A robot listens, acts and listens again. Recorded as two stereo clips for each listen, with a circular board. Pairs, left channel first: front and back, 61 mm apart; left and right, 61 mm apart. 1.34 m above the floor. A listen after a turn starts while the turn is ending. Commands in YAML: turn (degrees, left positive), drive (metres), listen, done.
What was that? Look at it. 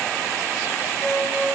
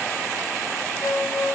turn: 75
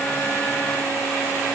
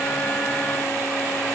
listen: true
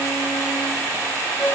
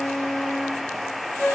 turn: 25
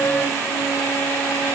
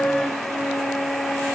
listen: true
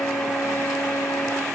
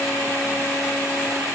listen: true
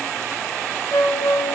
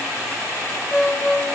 turn: 15
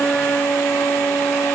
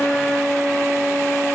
done: "Found it: a flute, straight ahead, under 1 m away."